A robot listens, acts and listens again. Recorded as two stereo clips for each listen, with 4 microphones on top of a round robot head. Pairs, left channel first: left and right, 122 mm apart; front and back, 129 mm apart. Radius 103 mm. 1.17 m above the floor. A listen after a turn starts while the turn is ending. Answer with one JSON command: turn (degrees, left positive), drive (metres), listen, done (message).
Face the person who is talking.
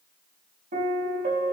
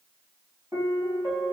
{"listen": true}
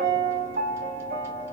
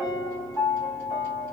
{"listen": true}
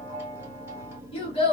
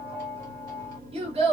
{"turn": 135}
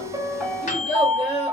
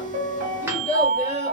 {"turn": 40}
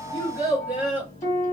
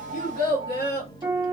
{"turn": -10}
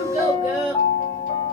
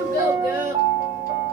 {"done": "Facing the child speaking, 1 to 2 m away."}